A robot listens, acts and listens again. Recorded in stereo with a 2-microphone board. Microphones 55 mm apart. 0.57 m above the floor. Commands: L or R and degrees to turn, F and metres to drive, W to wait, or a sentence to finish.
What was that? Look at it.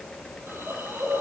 R45
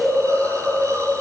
R90
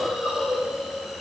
Facing the hiss.